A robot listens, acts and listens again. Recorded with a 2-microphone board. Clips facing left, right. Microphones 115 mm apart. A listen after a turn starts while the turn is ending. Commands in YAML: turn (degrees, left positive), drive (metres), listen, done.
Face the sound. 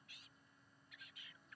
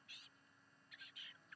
listen: true
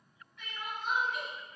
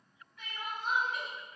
turn: -35
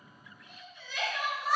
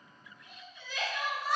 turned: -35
done: "Facing the crying."